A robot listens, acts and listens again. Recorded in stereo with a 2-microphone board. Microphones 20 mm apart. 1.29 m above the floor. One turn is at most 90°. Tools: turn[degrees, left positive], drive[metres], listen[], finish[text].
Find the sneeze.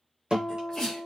Thought: The sneeze: about 25° left or 155° left.
Action: turn[25]
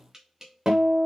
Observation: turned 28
Action: listen[]
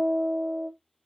Action: finish[I heard a sneeze, but can't make it out now. It was about 5° right or 130° left.]